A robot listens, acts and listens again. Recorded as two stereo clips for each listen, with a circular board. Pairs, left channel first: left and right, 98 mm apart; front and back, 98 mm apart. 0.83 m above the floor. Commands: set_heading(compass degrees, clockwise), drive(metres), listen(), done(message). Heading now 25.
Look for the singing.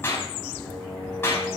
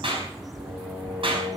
set_heading(185)
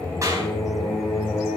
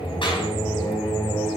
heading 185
done("Found it: singing, straight ahead, over 4 m away.")